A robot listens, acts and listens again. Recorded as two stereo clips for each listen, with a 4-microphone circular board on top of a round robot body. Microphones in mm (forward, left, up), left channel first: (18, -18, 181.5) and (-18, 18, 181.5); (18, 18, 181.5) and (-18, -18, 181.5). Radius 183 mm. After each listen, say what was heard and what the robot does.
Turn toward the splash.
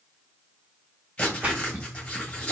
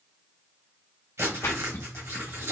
The splash: 75° left. Turn 75° left.
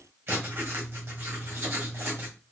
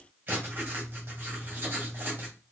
Facing where the splash came from. I can't hear it now.